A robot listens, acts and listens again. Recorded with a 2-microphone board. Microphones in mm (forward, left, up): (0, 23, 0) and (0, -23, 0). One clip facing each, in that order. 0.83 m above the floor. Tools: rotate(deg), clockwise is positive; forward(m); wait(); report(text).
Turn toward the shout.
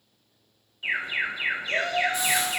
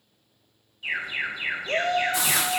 rotate(40)
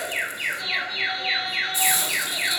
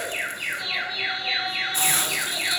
wait()
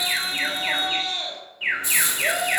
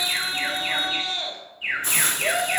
report("Found it: a shout, straight ahead.")